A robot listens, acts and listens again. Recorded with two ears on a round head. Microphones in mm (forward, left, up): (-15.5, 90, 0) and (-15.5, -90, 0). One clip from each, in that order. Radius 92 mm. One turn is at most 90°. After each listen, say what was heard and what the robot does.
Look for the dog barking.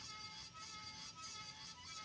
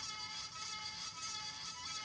Keep listening.
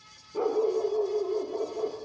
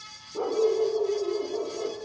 The dog barking: about 65° left or 115° left. Turn 65° left.
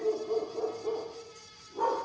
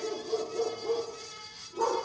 So it is at 60° left. Turn 60° left.
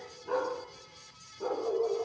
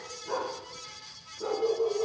The dog barking is now 20° left. Turn 20° left.
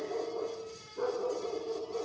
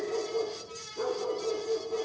Facing the dog barking, over 4 m away.